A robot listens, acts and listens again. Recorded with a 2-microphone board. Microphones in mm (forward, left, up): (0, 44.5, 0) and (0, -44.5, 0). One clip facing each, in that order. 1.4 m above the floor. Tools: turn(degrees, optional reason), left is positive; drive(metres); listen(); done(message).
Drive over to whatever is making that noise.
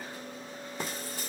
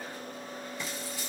turn(degrees=50, reason="The frying: about 50° left or 130° left.")
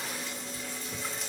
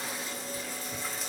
drive(metres=1.0)
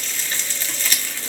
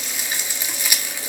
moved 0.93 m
turn(degrees=-15, reason="The frying is now 15° right.")
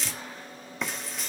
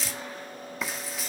drive(metres=1.0)
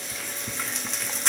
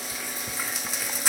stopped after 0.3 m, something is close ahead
done("Arrived at the frying, straight ahead.")